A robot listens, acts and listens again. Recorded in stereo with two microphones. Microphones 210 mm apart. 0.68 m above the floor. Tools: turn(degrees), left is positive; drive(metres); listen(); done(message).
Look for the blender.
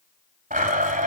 turn(degrees=-40)
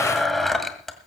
done("Facing the blender, 1 to 2 m away.")